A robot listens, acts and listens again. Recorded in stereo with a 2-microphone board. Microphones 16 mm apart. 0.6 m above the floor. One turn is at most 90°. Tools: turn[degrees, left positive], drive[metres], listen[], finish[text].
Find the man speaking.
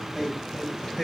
Thought: The man speaking: about 30° right or 150° right.
Action: turn[-30]
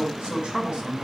Thought: So it is at 115° right.
Action: turn[-90]
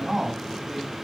Thought: The man speaking is now 10° right.
Action: turn[-10]
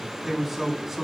Action: finish[Found it: a man speaking, straight ahead, over 4 m away.]